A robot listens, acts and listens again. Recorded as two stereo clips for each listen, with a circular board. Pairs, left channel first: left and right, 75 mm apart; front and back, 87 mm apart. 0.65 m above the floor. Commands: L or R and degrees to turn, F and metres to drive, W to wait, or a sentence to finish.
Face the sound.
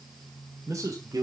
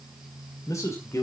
R55
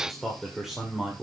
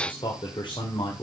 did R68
R15
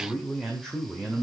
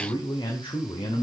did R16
R10
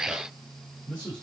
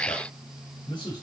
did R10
R10
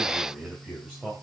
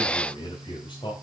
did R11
Facing the man speaking.